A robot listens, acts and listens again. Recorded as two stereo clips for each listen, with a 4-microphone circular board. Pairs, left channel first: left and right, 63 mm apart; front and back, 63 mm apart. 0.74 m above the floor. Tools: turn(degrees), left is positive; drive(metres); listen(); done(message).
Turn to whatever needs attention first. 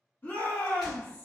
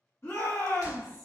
turn(degrees=40)
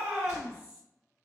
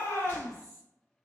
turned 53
turn(degrees=-10)
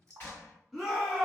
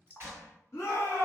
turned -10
done("Found it: a shout, straight ahead, 1 to 2 m away.")